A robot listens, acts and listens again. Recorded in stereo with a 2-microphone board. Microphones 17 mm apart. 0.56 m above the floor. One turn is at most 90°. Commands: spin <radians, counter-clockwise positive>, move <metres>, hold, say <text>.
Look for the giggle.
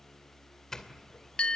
hold
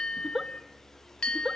spin -0.52
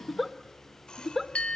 say Found it: a giggle, straight ahead, 1 to 2 m away.